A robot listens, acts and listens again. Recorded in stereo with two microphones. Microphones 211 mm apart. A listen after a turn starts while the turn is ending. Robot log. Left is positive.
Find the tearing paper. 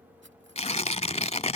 note: The tearing paper: about 30° left or 150° left.
cmd yaw +30
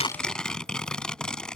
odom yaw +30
end: Found it: tearing paper, straight ahead.